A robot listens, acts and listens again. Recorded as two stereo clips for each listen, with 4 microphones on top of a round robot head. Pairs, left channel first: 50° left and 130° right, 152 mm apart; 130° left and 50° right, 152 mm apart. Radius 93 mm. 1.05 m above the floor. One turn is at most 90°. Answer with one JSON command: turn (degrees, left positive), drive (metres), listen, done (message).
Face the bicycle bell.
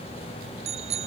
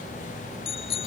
{"turn": 90}
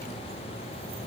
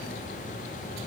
{"turn": 90}
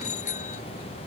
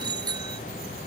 {"turn": 10}
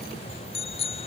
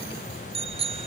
{"done": "Facing the bicycle bell."}